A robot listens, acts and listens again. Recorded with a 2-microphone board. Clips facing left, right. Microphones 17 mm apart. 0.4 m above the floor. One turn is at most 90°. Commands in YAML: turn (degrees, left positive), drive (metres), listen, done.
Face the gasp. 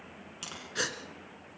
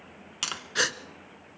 turn: -30
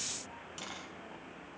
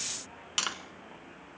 listen: true
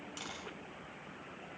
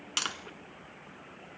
done: "I heard a gasp, but can't make it out now. It was about straight ahead or 120° right."